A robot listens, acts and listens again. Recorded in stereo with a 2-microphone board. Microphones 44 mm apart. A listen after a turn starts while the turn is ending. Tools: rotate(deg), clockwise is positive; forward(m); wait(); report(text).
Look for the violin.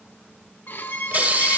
rotate(-55)
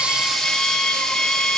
rotate(-15)
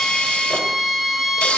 report("Found it: a violin, straight ahead.")